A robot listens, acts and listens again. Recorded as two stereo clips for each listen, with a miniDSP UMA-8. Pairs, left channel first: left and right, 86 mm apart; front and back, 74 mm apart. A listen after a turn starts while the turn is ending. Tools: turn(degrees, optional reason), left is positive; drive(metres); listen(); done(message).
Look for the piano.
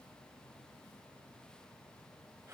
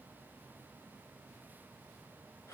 listen()
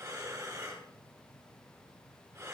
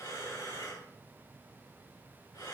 listen()
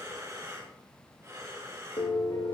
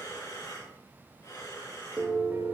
turn(degrees=120, reason="The piano: 120° left.")
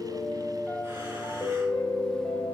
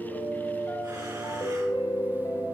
turn(degrees=20, reason="The piano is now 20° left.")
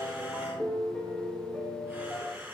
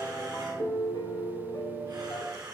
done("Facing the piano.")